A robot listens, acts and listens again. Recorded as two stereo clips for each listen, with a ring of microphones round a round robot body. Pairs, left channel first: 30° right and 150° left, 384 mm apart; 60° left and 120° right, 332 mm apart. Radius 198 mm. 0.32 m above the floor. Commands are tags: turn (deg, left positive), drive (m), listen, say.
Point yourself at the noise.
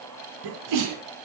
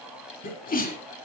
<turn deg="125"/>
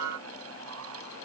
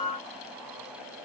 <say>Facing where the sneeze came from. I can't hear it now.</say>